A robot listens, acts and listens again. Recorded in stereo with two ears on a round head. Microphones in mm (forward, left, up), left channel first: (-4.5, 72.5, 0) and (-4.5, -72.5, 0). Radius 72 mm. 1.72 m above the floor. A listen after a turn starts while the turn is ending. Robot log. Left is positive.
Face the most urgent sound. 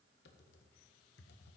cmd idle
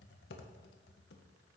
cmd idle
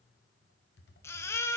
note: The baby crying: about 15° left or 165° left.
cmd yaw +15
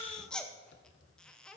end: Found it: a baby crying, straight ahead, under 1 m away.